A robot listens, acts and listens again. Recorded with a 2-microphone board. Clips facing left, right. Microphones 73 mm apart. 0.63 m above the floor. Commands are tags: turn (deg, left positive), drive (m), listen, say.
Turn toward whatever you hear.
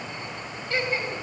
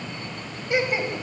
<turn deg="-20"/>
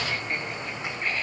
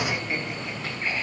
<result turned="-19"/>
<turn deg="-30"/>
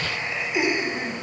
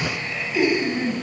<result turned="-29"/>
<turn deg="15"/>
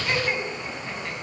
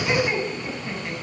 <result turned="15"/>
<say>Found it: laughter, straight ahead.</say>